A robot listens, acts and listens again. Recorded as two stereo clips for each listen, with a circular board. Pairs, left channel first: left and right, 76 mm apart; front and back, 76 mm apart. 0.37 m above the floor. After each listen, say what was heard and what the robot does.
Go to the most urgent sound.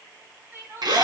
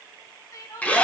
The crying: 35° right. Turn 35° right.
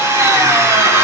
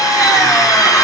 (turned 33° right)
Keep listening.
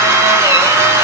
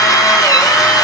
Keep listening.
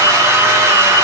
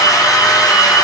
Facing where the crying came from. I can't hear it now. I did not reach it.